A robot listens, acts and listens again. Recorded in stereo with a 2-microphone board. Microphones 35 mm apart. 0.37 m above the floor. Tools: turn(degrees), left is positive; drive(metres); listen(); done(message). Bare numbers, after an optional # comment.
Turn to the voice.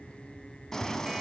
listen()
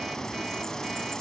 listen()
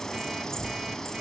# The child speaking: about 45° left or 135° left.
turn(45)
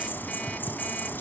listen()
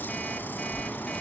done("Found it: a child speaking, straight ahead, 1 to 2 m away.")